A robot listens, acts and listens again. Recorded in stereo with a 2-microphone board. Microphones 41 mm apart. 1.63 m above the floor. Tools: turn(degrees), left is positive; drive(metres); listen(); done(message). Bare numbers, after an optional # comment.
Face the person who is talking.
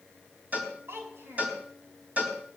turn(-90)
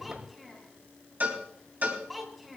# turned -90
done("Found it: a child speaking, straight ahead.")